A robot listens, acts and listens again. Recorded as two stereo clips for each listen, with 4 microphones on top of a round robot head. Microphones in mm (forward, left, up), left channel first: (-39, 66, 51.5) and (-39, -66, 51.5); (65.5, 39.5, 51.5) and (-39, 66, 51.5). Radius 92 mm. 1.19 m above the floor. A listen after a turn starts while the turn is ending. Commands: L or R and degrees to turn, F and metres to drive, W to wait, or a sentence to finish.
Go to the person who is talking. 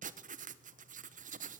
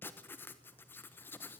W
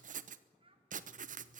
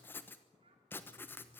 R140
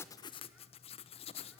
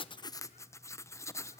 W
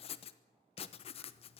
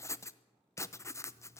W
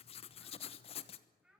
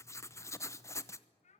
F1.0
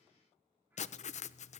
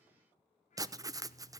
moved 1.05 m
W
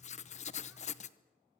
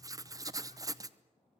W
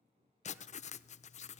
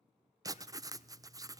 I heard a child speaking from this way, but can't make it out now. I did not reach it.